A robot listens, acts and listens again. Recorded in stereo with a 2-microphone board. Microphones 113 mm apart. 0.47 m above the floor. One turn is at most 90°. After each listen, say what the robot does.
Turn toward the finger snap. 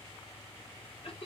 Keep listening.
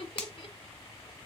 Turn 30° left.
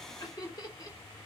Keep listening.
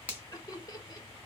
Turn 15° right.
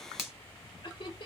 Found it: a finger snap, straight ahead, 1 to 2 m away.